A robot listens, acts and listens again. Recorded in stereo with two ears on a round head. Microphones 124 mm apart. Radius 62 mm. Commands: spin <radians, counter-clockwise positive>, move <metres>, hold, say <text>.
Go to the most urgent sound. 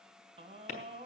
spin -0.79
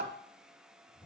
spin -1.57
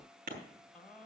hold
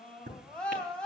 spin 0.17
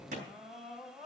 move 1.0
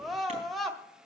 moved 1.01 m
move 1.0
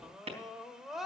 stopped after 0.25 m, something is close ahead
say I am next to the scream.